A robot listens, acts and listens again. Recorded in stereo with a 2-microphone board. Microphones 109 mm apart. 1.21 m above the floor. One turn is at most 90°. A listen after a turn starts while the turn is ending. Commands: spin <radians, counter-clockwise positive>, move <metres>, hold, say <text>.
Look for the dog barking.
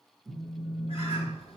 hold
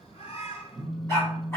spin 0.44
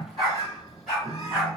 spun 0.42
say Facing the dog barking, 2 to 4 m away.